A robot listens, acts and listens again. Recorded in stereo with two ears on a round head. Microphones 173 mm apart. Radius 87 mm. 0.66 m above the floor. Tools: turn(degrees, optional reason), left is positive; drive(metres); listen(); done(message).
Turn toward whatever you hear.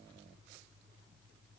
listen()
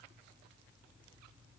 listen()
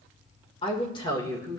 turn(degrees=20, reason="The woman speaking: about 20° left or 160° left.")
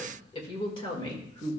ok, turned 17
turn(degrees=20, reason="The woman speaking: about 20° left or 160° left.")
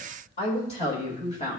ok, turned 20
turn(degrees=30, reason="The woman speaking: about 30° left or 150° left.")
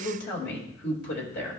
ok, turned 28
turn(degrees=120, reason="So it is at 120° left.")
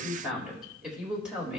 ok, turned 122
done("Facing the woman speaking.")